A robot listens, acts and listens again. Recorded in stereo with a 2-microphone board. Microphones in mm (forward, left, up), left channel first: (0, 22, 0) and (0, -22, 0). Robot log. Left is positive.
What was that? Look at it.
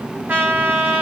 note: The trumpet: about 40° right or 140° right.
cmd yaw -40
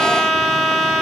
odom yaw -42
note: So it is at 10° right.
cmd yaw -10
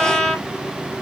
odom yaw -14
end: Found it: a trumpet, straight ahead.